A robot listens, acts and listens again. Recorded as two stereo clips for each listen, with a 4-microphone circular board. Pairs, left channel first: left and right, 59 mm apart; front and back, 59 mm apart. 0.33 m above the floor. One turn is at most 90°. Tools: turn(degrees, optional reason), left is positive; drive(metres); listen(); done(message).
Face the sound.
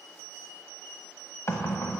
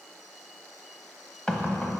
turn(degrees=70, reason="The knocking: 70° left.")
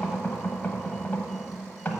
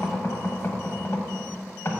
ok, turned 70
turn(degrees=30, reason="The knocking is now 30° left.")
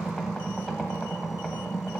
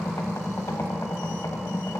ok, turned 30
done("Facing the knocking.")